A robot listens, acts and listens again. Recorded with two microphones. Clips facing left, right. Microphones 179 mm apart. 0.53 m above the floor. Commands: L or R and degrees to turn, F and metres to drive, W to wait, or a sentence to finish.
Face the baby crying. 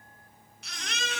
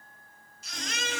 L70
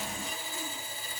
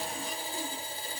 W
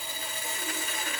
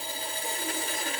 W
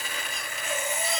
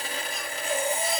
I heard a baby crying, but can't make it out now. It was about straight ahead or 40° left.